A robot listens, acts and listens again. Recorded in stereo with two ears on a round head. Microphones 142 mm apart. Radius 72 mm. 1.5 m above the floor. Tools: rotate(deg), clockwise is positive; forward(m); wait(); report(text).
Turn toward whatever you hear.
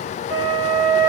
rotate(90)
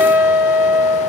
rotate(10)
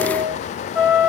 report("Facing the flute.")